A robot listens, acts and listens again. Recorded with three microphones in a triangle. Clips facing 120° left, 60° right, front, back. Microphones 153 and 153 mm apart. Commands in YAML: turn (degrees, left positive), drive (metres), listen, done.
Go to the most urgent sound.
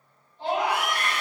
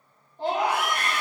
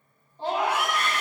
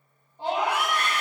turn: -105
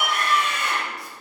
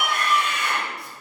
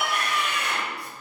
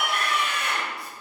turn: 15
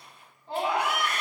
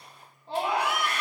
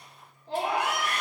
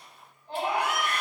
drive: 1.0
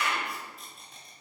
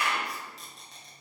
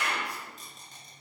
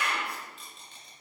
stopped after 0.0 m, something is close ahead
done: "Something is in my way. I am facing the scream but have not reached it."